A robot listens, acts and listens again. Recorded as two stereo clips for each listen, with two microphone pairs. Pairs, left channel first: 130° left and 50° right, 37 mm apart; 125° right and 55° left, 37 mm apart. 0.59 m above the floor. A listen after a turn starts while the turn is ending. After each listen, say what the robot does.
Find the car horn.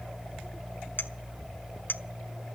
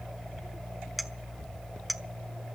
Keep listening.
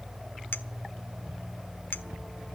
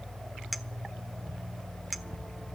Keep listening.
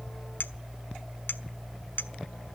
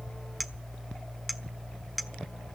I can't make out a car horn, only a clink.